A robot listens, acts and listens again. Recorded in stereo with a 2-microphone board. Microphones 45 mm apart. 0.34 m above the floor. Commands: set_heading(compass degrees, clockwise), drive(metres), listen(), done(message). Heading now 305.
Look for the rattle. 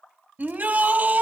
listen()
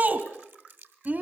listen()
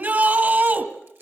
done("I can't make out a rattle to turn to.")